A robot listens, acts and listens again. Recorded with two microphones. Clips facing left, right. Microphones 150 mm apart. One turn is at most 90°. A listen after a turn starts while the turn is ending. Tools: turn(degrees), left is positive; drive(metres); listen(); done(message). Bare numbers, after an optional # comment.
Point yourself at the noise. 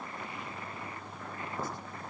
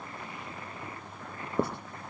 # The writing: about 65° right or 115° right.
turn(-65)
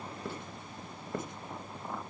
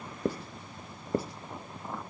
# So it is at 35° right.
turn(-35)
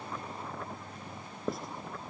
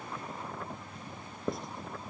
done("Found it: writing, straight ahead.")